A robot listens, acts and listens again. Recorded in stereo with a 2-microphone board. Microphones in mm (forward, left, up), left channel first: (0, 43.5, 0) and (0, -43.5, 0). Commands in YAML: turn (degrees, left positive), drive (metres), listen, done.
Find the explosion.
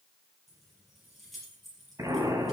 turn: -40
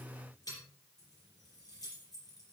listen: true
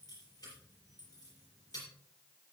done: "I heard an explosion, but can't make it out now. It was about straight ahead or 100° right."